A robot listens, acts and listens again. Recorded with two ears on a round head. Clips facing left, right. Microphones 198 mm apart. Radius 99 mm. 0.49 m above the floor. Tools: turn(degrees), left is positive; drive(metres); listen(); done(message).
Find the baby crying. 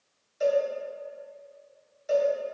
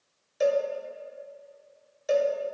listen()
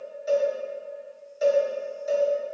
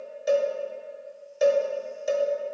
listen()
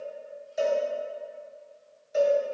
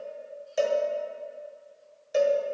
done("I can't make out a baby crying, only a cowbell.")